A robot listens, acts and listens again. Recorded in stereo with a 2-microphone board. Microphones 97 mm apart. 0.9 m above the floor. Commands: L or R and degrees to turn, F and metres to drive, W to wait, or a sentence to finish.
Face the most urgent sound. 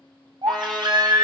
R50
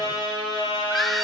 Found it: a baby crying, straight ahead.